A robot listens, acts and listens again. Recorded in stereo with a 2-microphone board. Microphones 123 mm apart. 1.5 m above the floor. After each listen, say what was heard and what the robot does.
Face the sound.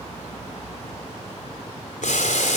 Turn 90° left.
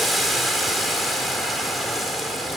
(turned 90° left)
Facing the boiling.